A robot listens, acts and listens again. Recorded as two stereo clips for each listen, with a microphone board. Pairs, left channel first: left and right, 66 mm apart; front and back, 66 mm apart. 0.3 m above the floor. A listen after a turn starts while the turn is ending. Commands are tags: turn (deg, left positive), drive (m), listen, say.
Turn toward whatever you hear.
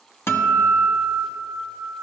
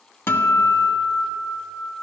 <turn deg="45"/>
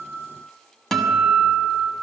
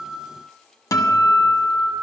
<say>Found it: a guitar, straight ahead.</say>